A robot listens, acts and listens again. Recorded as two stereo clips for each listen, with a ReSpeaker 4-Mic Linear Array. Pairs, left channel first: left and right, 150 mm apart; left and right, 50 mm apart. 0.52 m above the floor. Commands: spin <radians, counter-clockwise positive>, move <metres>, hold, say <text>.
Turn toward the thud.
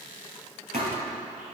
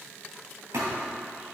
spin -1.31
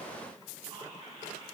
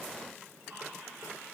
hold
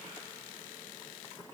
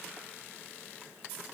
say I heard a thud, but can't make it out now. It was about straight ahead or 30° right.